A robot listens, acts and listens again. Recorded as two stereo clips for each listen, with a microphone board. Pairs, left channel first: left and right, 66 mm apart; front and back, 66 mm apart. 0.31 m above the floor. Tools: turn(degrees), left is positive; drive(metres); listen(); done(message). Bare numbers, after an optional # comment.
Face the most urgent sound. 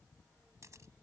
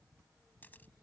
listen()
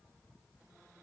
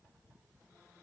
listen()
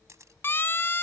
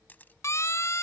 # The siren: 40° left.
turn(40)
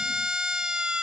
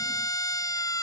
# The siren is now 10° right.
turn(-10)
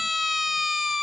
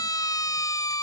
done("Facing the siren.")